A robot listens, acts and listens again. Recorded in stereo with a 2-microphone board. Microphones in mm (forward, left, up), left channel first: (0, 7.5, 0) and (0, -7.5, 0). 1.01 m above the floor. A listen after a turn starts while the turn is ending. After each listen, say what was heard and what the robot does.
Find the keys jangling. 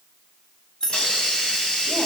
The keys jangling: about 45° left or 135° left. Turn 45° left.
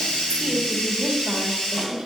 Keep listening.
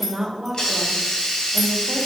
Keep listening.
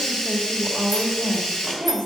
I heard keys jangling, but can't make it out now. It was about straight ahead or 90° left.